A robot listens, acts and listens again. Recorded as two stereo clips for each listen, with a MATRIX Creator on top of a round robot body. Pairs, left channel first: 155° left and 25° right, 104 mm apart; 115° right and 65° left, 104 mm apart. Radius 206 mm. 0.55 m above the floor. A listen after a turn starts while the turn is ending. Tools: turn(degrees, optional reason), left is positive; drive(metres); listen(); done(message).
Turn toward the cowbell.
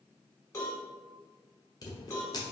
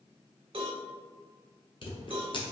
turn(degrees=100, reason="The cowbell: 100° left.")
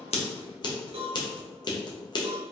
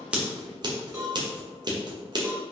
done("Found it: a cowbell, straight ahead, 1 to 2 m away.")